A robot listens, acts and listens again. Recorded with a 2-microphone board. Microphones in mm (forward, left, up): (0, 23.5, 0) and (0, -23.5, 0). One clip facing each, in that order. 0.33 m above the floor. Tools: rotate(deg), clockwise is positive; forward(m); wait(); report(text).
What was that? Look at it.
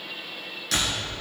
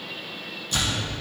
rotate(-90)
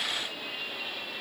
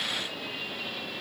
report("I heard a door slam from this way, but can't make it out now.")